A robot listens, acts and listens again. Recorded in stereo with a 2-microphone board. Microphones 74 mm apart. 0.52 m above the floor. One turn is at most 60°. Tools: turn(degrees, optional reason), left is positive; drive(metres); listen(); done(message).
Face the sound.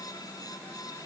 listen()
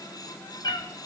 turn(degrees=60)
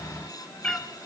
turn(degrees=10, reason="So it is at 10° left.")
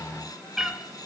turn(degrees=-10, reason="The cat meowing is now 10° right.")
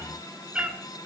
turn(degrees=-20, reason="The cat meowing is now 20° right.")
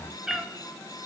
turn(degrees=-10, reason="The cat meowing is now 10° right.")
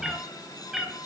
done("Facing the cat meowing.")